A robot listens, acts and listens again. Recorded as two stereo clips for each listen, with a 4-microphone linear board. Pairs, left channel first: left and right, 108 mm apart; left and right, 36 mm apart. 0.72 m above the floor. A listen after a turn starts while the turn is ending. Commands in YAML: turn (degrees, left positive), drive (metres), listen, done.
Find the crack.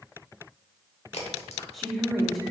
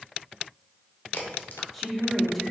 turn: 65
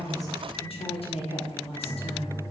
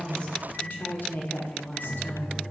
listen: true
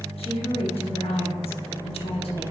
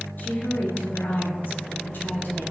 done: "I heard a crack, but can't make it out now. It was about straight ahead or 50° left."